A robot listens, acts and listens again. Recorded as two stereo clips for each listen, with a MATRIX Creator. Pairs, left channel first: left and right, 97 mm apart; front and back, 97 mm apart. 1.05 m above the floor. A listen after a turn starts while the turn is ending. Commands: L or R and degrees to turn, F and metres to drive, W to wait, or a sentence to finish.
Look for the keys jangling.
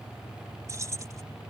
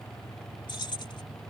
R35
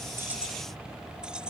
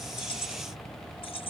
R10
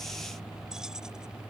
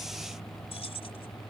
W
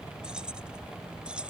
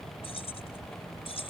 R10
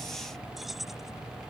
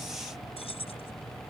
Found it: keys jangling, straight ahead.